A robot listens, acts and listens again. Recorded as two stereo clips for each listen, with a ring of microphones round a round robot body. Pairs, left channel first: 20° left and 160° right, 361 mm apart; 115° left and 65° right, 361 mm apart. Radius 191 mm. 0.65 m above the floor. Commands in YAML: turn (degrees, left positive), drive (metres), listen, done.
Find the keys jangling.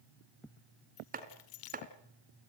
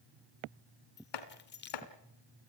turn: 50
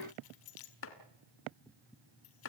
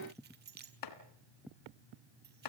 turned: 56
done: "Facing the keys jangling, 2 to 4 m away."